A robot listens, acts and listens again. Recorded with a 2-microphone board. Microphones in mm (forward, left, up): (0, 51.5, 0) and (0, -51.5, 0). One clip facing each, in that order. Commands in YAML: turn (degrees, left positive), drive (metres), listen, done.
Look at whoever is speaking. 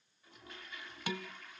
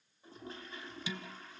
listen: true
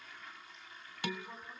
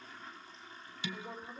turn: -90
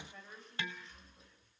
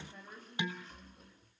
done: "Facing the woman speaking."